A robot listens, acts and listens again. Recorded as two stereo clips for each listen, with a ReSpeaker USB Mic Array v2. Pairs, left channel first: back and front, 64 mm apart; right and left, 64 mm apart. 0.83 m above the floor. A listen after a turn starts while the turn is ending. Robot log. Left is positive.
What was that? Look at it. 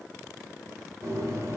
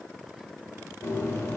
note: The bird: 40° right.
cmd yaw -40
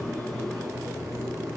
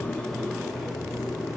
end: Facing the bird.